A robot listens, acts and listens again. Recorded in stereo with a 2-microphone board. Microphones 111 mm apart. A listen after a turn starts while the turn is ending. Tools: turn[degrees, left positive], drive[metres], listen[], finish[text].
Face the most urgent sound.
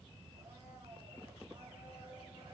Action: listen[]
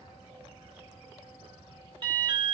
Thought: The alarm: about 55° right or 125° right.
Action: turn[-55]
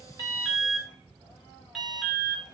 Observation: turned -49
Action: finish[Facing the alarm.]